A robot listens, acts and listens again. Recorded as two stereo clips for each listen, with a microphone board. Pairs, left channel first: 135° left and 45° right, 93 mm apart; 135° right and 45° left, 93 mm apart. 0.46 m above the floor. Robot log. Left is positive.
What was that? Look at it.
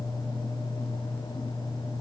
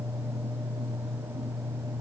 cmd idle
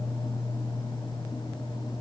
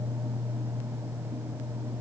cmd idle
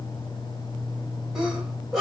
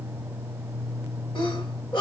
note: The sneeze: 135° right.
cmd yaw -135
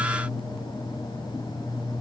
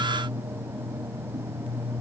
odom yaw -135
end: I heard a sneeze from this way, but can't make it out now.